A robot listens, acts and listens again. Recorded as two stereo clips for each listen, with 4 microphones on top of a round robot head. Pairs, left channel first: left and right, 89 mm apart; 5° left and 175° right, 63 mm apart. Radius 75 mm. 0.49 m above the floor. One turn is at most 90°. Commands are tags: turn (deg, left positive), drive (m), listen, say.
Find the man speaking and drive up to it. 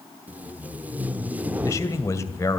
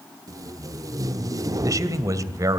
<turn deg="90"/>
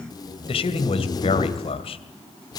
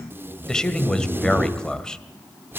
<turn deg="80"/>
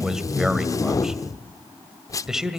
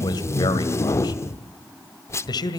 <drive m="1.0"/>
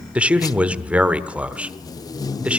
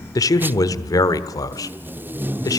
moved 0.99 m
<turn deg="-15"/>
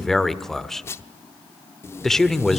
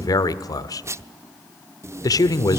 <drive m="1.0"/>
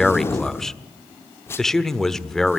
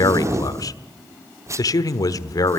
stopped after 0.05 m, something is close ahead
<say>I am next to the man speaking.</say>